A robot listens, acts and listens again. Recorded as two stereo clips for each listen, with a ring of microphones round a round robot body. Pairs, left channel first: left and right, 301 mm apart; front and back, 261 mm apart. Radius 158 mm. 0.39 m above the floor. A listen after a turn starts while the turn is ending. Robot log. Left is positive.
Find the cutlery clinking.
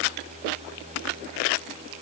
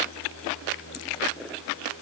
cmd idle
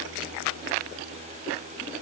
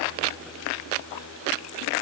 cmd idle
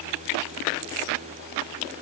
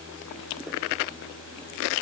end: I can't make out cutlery clinking to turn to.